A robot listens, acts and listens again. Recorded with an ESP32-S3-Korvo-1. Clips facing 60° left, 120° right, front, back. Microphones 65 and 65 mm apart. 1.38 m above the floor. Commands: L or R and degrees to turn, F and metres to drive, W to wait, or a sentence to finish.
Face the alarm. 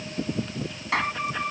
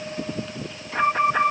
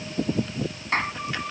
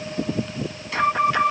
R160
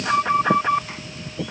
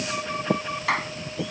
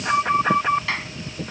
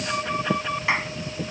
L45
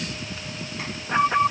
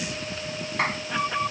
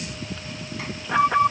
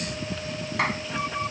Facing the alarm.